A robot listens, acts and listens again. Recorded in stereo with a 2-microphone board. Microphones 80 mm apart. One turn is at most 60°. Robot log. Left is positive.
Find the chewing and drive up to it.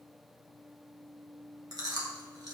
note: The chewing: about 50° right or 130° right.
cmd yaw -50
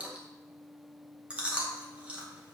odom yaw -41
note: So it is at 15° right.
cmd yaw -15
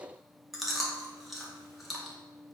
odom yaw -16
cmd fwd 1.0
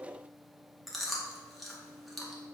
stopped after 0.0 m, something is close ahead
end: Blocked. The chewing is further on, straight ahead.